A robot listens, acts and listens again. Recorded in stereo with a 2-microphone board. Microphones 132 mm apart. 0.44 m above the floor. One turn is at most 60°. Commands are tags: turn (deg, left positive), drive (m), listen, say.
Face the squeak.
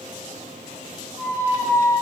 <turn deg="-20"/>
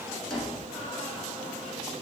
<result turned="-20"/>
<say>Facing the squeak.</say>